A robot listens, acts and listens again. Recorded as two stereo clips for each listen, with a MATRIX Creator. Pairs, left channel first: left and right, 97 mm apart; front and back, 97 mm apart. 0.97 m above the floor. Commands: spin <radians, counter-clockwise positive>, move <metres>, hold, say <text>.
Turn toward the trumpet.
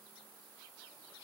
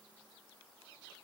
hold
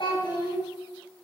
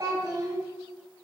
hold
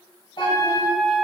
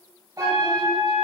spin -0.87
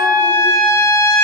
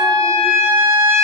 say Facing the trumpet, 1 to 2 m away.